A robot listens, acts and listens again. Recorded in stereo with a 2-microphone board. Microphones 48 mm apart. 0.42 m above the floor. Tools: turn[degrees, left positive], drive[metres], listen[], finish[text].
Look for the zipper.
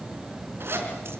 Thought: The zipper: about 55° right or 125° right.
Action: turn[-55]
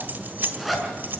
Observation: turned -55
Action: finish[Facing the zipper, over 4 m away.]